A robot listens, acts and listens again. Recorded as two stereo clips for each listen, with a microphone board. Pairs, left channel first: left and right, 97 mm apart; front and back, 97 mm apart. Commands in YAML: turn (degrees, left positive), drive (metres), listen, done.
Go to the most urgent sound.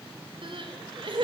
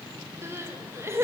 turn: -115
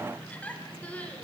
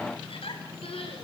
turn: 15
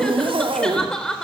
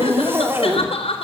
drive: 1.0
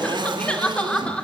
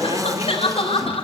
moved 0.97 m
turn: 10
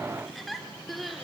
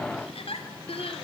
drive: 1.0
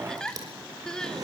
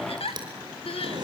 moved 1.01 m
drive: 1.0
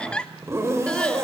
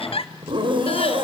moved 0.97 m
turn: 10
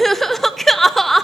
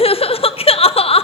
drive: 1.0
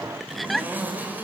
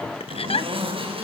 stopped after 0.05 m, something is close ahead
done: "I am next to the crying."